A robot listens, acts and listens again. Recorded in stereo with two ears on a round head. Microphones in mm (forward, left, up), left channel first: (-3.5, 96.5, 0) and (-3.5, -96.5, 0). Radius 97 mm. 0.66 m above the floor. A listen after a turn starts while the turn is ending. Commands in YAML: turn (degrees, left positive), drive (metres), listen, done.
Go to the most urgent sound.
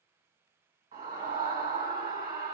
turn: -40
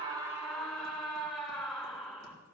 drive: 1.0
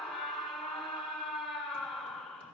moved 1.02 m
drive: 1.0
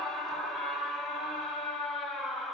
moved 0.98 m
drive: 1.0
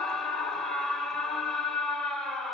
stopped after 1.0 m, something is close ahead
done: "Arrived at the scream, straight ahead."